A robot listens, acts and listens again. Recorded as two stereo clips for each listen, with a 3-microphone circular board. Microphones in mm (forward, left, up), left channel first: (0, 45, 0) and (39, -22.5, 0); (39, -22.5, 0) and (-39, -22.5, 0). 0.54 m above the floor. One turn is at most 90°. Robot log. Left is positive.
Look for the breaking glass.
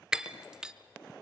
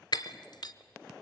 note: The breaking glass: 20° left.
cmd yaw +20
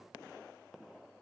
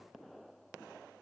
end: I heard breaking glass from this way, but can't make it out now.